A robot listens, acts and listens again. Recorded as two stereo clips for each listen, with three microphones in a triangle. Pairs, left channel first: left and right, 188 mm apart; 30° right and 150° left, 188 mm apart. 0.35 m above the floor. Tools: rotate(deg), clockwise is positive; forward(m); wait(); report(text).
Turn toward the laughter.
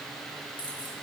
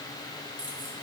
wait()
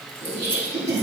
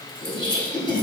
rotate(90)
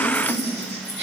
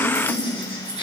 rotate(40)
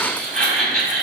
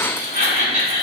report("Found it: laughter, straight ahead, 1 to 2 m away.")